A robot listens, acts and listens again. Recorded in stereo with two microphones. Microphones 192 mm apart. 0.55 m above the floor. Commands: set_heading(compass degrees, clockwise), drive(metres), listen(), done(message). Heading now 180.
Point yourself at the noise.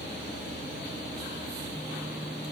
listen()
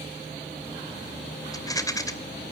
set_heading(160)
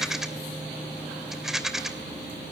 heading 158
done("Found it: a rattle, straight ahead.")